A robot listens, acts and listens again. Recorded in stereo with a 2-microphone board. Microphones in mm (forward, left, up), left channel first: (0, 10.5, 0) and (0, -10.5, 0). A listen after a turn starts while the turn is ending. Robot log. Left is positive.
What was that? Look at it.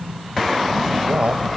note: The man speaking: about 65° right or 115° right.
cmd yaw -65
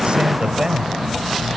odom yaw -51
note: So it is at 30° right.
cmd yaw -30
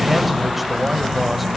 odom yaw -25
cmd idle
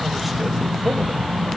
cmd idle
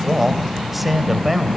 end: Found it: a man speaking, straight ahead.